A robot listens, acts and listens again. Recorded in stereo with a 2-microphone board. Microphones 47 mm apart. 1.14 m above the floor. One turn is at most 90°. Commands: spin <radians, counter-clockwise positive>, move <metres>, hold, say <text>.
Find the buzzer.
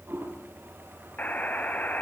spin 0.61
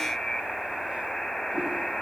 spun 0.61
say Facing the buzzer, 2 to 4 m away.